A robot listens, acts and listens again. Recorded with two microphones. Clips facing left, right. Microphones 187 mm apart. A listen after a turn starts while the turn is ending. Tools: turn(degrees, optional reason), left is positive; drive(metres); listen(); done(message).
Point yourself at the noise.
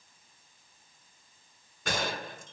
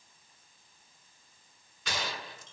turn(degrees=50, reason="The gunshot: about 50° left or 130° left.")
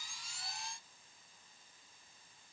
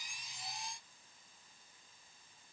listen()
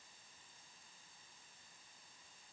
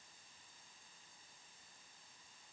done("I heard a gunshot, but can't make it out now. It was about straight ahead or 80° left.")